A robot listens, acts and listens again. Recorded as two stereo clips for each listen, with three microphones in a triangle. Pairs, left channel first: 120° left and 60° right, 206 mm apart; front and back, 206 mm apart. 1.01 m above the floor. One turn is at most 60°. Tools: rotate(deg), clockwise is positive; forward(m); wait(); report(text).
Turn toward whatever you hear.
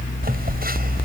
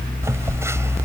rotate(60)
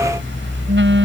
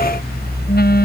rotate(40)
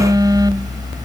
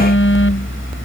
rotate(-10)
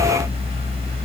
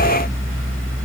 wait()
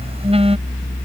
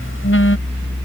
report("Facing the phone buzzing.")